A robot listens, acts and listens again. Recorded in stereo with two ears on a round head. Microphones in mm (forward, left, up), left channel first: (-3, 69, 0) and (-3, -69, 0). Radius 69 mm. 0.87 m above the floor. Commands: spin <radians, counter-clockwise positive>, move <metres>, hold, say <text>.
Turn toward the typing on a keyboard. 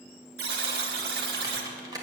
spin -0.44
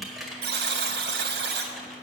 say Found it: typing on a keyboard, straight ahead.